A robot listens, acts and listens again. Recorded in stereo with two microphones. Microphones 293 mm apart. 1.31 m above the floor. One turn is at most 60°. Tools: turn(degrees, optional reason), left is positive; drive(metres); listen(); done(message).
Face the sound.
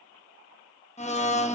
turn(degrees=25, reason="The blender: about 25° left or 155° left.")
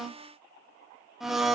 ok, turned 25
done("Found it: a blender, straight ahead, 1 to 2 m away.")